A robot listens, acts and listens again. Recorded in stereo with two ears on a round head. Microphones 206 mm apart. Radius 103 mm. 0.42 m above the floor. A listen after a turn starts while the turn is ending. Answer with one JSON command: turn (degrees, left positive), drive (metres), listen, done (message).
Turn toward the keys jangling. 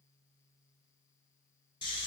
{"listen": true}
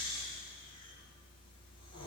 {"listen": true}
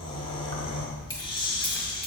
{"turn": 15}
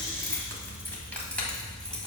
{"turn": 30}
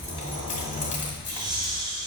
{"turn": 145}
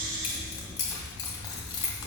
{"turn": 20}
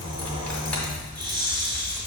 {"done": "Found it: keys jangling, straight ahead, 1 to 2 m away."}